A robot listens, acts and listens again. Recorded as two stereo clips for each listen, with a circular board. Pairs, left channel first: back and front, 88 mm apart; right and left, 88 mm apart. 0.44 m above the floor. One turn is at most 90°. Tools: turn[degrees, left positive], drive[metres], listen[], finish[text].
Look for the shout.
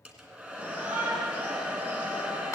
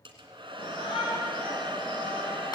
Thought: The shout: 70° right.
Action: turn[-70]
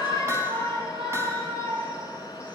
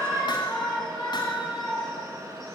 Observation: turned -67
Action: finish[Found it: a shout, straight ahead.]